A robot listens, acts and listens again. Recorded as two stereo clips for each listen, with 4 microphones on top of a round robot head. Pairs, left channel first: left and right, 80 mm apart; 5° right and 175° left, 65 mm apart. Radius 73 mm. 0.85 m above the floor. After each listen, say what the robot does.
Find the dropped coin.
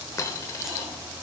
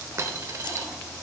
Turn 135° left.
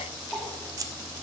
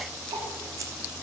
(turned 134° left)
I heard a dropped coin from this way, but can't make it out now.